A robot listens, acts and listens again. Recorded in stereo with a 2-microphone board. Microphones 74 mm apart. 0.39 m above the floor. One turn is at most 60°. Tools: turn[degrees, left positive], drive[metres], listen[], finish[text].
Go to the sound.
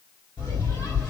Action: turn[60]
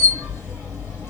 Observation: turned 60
Thought: So it is at 35° left.
Action: turn[35]
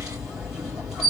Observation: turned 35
Action: drive[1.0]
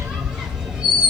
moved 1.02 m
Action: drive[1.0]
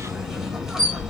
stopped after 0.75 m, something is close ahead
Action: finish[I am next to the squeak.]